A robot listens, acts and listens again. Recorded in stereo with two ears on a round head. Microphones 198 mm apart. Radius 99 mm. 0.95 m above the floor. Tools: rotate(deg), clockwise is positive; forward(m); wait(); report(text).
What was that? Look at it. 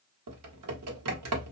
rotate(90)
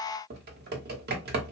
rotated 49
rotate(45)
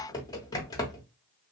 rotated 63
rotate(-15)
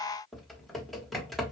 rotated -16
report("Facing the typing on a keyboard, under 1 m away.")